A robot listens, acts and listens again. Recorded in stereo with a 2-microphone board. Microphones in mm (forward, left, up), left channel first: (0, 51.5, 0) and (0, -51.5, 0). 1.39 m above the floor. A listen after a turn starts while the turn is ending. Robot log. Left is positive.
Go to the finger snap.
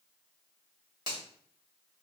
note: The finger snap: about 40° right or 140° right.
cmd yaw -40
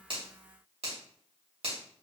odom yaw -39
note: So it is at 100° right.
cmd yaw -100
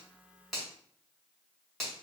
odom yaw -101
cmd fwd 1.0
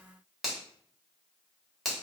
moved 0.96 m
cmd fwd 1.0
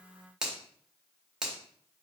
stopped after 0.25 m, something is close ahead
end: I am next to the finger snap.